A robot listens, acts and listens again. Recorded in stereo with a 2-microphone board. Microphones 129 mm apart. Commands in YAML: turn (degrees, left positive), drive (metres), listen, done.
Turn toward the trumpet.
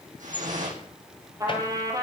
turn: -25
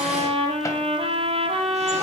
turn: -130
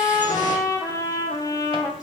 turn: 25
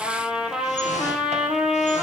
done: "Facing the trumpet, 2 to 4 m away."